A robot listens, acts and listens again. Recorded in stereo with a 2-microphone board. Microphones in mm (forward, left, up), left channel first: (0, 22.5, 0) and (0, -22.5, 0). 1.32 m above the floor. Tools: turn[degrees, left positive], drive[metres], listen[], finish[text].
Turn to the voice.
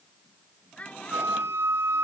Thought: The child speaking: about 30° left or 150° left.
Action: turn[30]
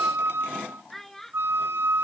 Action: finish[Facing the child speaking.]